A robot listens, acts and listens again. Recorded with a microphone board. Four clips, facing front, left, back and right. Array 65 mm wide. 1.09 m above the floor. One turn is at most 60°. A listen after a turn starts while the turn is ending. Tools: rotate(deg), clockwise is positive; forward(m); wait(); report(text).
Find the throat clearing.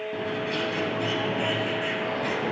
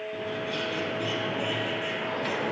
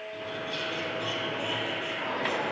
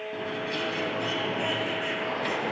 wait()
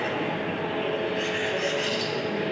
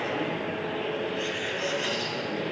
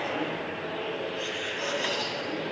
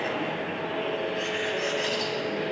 wait()
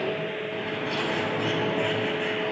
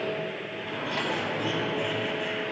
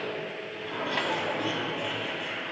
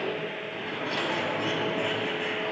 report("I can't make out throat clearing to turn to.")